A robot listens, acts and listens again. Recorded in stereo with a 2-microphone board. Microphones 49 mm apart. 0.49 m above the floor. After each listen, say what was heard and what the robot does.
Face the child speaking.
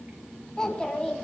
The child speaking: about 20° left or 160° left. Turn 20° left.
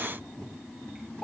The child speaking: about 15° left or 165° left. Turn 15° left.
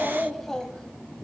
The child speaking: about 20° left or 160° left. Turn 20° left.
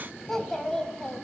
The child speaking: about 20° left or 160° left. Turn 20° left.
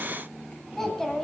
Turn 30° left.
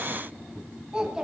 So it is at 15° right. Turn 15° right.
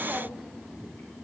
Keep listening.
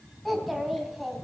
Facing the child speaking.